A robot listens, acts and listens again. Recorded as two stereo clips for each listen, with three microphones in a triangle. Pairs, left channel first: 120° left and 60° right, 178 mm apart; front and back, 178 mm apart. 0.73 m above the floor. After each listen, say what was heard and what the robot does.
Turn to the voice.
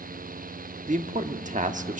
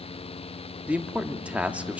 The man speaking: 100° right. Turn 100° right.
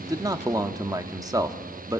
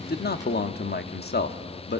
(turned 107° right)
The man speaking is now 10° left. Turn 10° left.
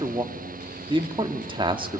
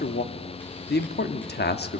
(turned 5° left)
Facing the man speaking.